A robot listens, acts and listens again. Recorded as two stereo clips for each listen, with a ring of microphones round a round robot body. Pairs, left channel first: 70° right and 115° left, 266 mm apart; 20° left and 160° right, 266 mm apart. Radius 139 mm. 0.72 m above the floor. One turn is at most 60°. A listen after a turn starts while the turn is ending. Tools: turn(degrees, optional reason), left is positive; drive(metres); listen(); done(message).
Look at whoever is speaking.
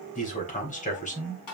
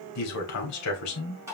done("Found it: a man speaking, straight ahead.")